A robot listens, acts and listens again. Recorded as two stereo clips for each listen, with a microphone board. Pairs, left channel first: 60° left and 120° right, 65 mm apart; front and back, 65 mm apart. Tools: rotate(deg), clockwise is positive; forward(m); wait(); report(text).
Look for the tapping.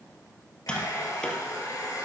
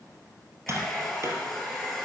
rotate(-135)
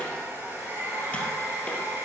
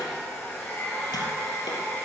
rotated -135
wait()
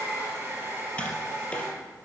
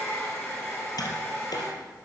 wait()
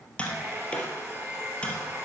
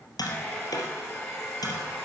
rotate(10)
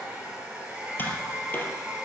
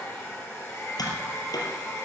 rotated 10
report("Facing the tapping.")